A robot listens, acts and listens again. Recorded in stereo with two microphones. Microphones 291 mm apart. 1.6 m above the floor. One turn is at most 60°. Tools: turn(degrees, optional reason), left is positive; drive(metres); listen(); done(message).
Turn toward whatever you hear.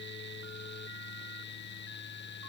listen()
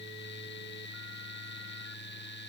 listen()
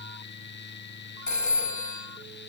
turn(degrees=60)
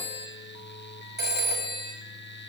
turn(degrees=35, reason="So it is at 35° left.")
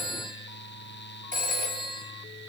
turn(degrees=-30, reason="The phone ringing is now 30° right.")
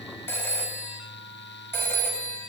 turn(degrees=10, reason="The phone ringing is now 10° left.")
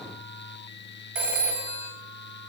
done("Facing the phone ringing, 2 to 4 m away.")